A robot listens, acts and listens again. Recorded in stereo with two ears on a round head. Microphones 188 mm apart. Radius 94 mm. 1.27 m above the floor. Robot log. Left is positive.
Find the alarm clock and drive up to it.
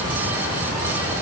cmd idle
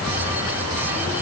cmd idle
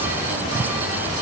end: I can't make out an alarm clock.